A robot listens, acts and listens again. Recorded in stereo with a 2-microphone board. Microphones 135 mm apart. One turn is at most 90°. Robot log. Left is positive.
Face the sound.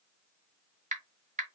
note: The typing on a keyboard: about 65° right or 115° right.
cmd yaw -65
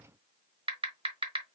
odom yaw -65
note: So it is at 45° right.
cmd yaw -45
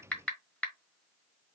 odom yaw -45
note: The typing on a keyboard is now 10° left.
cmd yaw +10
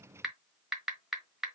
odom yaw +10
end: Found it: typing on a keyboard, straight ahead, 1 to 2 m away.